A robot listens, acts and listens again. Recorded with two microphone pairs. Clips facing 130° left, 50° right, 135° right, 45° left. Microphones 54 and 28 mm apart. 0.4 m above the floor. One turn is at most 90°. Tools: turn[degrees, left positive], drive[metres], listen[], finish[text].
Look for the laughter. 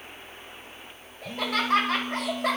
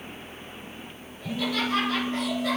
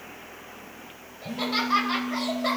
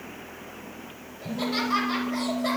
Thought: The laughter: 150° left.
Action: turn[90]
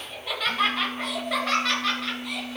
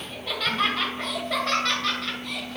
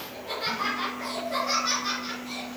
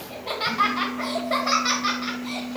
Thought: The laughter is now 50° left.
Action: turn[50]
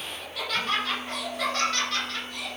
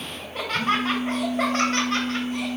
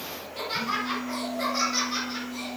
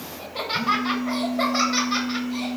Action: finish[Facing the laughter.]